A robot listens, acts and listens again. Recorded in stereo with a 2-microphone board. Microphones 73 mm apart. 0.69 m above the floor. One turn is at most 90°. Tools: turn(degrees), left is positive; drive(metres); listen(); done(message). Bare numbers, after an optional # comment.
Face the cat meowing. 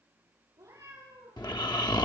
# The cat meowing: about 55° right or 125° right.
turn(-55)
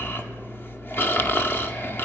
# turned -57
listen()
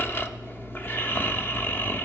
listen()
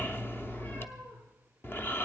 # So it is at 20° left.
turn(20)
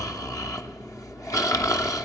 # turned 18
listen()
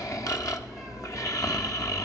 listen()
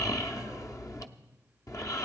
done("I heard a cat meowing from this way, but can't make it out now.")